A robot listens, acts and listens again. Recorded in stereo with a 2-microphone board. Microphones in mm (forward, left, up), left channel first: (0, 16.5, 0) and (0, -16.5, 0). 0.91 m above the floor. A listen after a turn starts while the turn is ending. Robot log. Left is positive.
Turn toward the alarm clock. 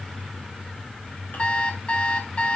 note: The alarm clock: about 40° left or 140° left.
cmd yaw +40
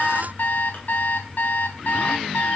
note: So it is at 100° left.
cmd yaw +100
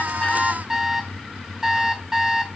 note: The alarm clock is now 15° right.
cmd yaw -15
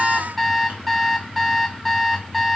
end: Facing the alarm clock.